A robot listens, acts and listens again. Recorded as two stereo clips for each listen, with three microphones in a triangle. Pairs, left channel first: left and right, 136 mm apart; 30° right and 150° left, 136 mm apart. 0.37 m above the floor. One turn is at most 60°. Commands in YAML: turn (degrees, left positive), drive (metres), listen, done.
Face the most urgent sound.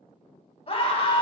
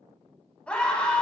turn: 50
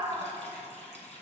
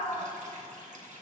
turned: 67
turn: -15
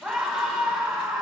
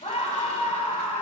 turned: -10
done: "Facing the scream, 2 to 4 m away."